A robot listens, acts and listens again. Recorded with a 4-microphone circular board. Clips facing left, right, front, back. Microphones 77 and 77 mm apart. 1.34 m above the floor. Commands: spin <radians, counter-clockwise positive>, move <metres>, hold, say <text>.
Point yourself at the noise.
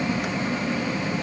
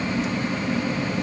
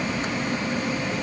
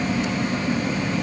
hold
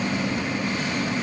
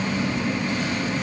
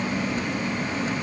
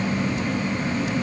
hold
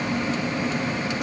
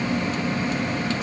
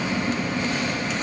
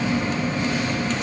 say I can't make out anything.